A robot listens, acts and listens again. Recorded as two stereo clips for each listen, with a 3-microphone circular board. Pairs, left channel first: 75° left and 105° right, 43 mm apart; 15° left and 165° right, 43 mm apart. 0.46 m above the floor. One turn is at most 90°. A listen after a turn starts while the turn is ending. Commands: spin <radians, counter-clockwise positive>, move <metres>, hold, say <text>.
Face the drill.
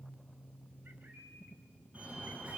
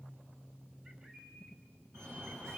hold
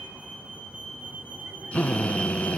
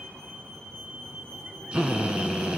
spin 1.57
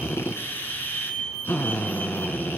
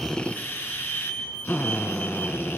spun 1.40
spin 0.79
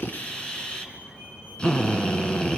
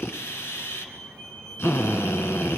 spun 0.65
say Found it: a drill, straight ahead, 1 to 2 m away.